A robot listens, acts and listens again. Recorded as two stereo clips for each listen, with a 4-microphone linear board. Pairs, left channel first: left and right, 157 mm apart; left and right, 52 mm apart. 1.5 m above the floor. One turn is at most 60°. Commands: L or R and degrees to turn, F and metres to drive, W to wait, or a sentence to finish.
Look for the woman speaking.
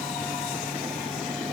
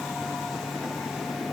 W
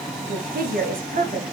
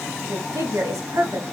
R60
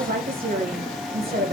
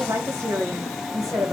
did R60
R60
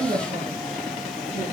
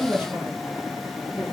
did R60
R30
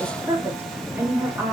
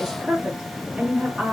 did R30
R15
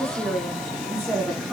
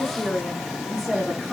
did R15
Facing the woman speaking.